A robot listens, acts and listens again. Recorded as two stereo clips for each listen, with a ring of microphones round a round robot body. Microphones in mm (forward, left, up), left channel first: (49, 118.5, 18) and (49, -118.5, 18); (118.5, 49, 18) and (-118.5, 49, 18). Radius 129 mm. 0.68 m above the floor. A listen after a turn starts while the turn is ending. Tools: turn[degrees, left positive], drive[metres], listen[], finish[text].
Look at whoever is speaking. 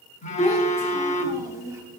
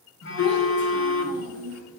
Thought: The child speaking: 15° right.
Action: turn[-15]
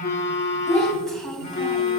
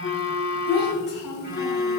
Action: finish[Found it: a child speaking, straight ahead.]